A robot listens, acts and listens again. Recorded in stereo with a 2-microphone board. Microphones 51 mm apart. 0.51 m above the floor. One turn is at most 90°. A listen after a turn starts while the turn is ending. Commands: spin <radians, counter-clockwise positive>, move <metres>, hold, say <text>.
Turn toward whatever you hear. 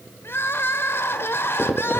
spin 0.87
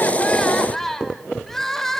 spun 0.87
spin 0.17
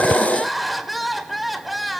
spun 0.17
say Found it: crying, straight ahead, 1 to 2 m away.